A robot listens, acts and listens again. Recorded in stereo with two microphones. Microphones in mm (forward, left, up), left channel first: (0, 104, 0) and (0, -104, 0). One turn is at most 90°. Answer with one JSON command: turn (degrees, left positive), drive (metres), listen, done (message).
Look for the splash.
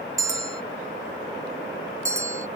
{"listen": true}
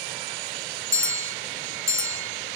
{"listen": true}
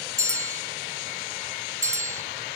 {"done": "I can't make out a splash, only a bell."}